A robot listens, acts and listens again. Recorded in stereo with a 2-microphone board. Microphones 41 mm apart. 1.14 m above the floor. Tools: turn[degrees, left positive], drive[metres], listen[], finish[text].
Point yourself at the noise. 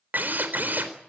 Thought: The drill: about 50° right or 130° right.
Action: turn[-50]
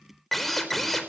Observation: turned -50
Action: finish[Found it: a drill, straight ahead.]